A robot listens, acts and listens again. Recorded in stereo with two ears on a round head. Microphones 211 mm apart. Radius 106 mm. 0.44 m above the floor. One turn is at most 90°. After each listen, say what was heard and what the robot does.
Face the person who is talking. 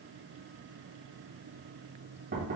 Keep listening.
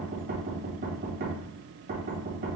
Keep listening.
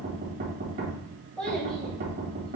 Turn 30° left.
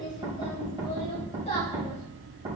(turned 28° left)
So it is at 145° left. Turn 90° left.
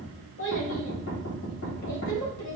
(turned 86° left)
The child speaking is now 60° left. Turn 60° left.
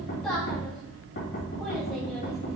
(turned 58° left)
Facing the child speaking, 1 to 2 m away.